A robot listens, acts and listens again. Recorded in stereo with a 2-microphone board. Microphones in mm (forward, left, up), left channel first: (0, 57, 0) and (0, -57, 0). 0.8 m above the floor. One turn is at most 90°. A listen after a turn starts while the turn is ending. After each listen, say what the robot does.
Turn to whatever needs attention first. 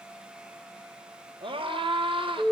Turn 50° right.
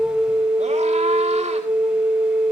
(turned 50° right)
Keep listening.
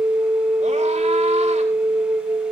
Keep listening.
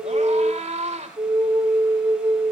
Turn 80° right.
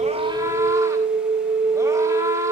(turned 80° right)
Turn 25° right.
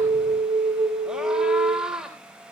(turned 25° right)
Facing the scream, 2 to 4 m away.